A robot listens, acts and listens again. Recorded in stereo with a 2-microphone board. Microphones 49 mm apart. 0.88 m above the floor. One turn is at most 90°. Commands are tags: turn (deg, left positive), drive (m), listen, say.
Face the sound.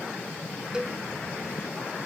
<turn deg="-15"/>
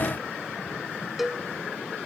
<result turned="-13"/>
<say>Facing the cowbell.</say>